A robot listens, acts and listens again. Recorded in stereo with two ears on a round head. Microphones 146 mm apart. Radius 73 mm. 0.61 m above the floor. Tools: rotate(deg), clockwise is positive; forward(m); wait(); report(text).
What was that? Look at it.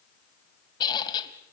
rotate(-25)
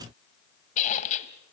rotate(-130)
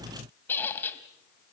rotate(-15)
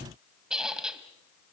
report("Facing the squeak, 1 to 2 m away.")